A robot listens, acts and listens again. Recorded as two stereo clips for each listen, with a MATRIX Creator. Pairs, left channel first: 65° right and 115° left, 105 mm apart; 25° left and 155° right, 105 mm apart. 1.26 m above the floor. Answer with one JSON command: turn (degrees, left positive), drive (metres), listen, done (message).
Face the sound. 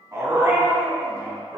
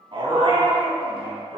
{"turn": 175}
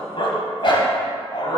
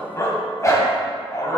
{"turn": -30}
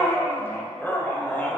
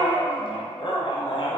{"done": "Facing the dog barking."}